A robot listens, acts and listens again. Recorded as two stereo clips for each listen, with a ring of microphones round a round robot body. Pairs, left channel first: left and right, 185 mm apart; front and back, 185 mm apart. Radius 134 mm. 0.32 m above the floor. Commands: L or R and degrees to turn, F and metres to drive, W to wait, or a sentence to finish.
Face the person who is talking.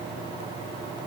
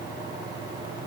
W
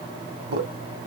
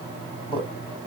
R100
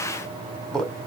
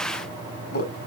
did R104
Facing the man speaking, 1 to 2 m away.